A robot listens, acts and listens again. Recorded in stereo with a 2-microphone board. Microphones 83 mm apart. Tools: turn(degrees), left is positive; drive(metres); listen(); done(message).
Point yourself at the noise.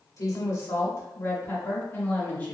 turn(degrees=20)
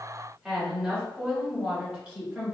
turn(degrees=-20)
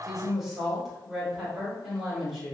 turn(degrees=-10)
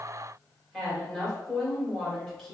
done("Facing the woman speaking, 2 to 4 m away.")